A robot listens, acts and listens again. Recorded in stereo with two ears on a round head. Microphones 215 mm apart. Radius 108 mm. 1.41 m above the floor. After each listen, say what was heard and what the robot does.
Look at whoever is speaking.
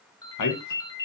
Turn 90° left.
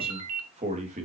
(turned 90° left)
So it is at 30° right. Turn 30° right.
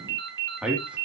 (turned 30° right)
Facing the man speaking.